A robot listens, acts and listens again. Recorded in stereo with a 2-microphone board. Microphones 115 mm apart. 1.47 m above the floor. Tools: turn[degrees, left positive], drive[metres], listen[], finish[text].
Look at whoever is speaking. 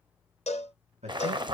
Action: turn[-90]
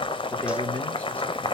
Action: listen[]
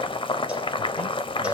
Action: listen[]
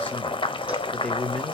Thought: The man speaking is now 10° left.
Action: turn[10]
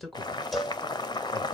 Action: finish[Found it: a man speaking, straight ahead, 1 to 2 m away.]